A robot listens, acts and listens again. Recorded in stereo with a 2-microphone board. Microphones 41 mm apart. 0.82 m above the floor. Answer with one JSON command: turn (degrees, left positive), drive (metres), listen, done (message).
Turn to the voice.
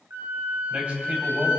{"turn": -35}
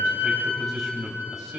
{"done": "Facing the man speaking, 2 to 4 m away."}